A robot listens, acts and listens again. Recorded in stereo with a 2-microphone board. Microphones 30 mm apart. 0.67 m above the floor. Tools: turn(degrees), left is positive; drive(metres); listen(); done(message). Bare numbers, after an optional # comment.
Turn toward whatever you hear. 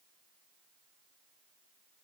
listen()
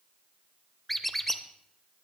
turn(30)
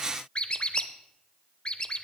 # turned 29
# So it is at 145° left.
turn(145)
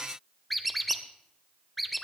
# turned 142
done("Found it: a squeak, straight ahead, under 1 m away.")